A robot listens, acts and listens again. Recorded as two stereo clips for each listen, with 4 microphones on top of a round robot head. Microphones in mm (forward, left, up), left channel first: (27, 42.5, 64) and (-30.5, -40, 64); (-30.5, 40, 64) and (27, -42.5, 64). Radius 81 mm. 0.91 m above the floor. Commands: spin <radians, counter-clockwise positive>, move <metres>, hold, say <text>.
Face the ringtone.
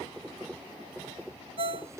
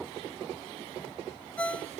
spin -2.71
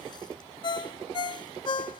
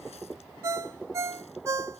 spin 0.17
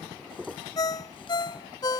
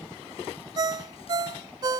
say Facing the ringtone.